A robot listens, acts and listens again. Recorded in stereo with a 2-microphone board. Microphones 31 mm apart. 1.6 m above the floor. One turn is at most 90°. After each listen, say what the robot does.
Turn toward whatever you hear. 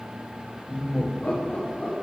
Turn 45° left.
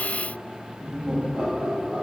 Turn 45° right.
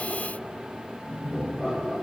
Turn 30° right.
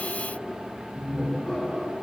Turn 10° left.
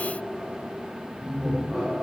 Facing the laughter, 2 to 4 m away.